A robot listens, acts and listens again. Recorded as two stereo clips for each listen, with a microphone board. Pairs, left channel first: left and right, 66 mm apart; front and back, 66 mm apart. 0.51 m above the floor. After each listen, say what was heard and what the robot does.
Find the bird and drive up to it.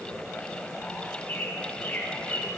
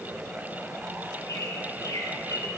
The bird: 25° left. Turn 25° left.
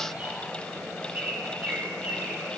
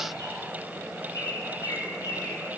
The bird is now 25° right. Turn 25° right.
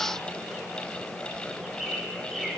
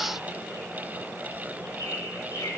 Drive 1.0 m forward.
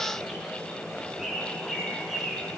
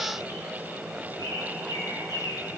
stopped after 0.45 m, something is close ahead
Something is in my way. I am facing the bird but have not reached it.